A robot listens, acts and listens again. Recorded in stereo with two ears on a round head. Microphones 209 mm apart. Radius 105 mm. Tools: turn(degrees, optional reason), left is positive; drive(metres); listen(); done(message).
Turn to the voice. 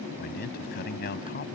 turn(degrees=45, reason="The man speaking: about 45° left or 135° left.")
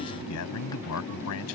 turn(degrees=95, reason="So it is at 95° left.")
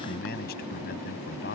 turn(degrees=45, reason="The man speaking is now 45° left.")
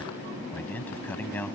turn(degrees=10, reason="The man speaking is now 10° left.")
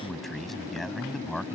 done("Facing the man speaking.")